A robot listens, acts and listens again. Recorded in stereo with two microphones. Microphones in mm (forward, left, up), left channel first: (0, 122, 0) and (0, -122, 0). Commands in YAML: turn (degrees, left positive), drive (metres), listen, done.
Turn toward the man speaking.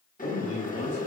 turn: 70
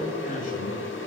turn: 35
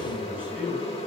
turn: -10
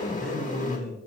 done: "Found it: a man speaking, straight ahead."